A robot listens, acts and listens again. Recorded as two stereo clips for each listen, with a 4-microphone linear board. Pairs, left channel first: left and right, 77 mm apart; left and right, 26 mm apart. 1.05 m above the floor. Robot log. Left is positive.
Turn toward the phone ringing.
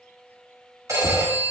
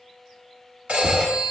note: The phone ringing: about 45° right or 135° right.
cmd yaw -45
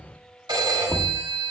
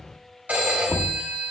note: So it is at 85° right.
cmd yaw -85
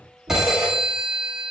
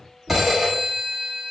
end: Facing the phone ringing.